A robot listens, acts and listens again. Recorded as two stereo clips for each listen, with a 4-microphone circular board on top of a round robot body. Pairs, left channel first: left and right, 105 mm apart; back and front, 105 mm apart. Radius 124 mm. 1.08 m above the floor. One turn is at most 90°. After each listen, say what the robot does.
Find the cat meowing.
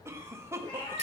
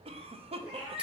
Turn 45° left.
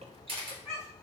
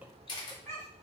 Facing the cat meowing, 2 to 4 m away.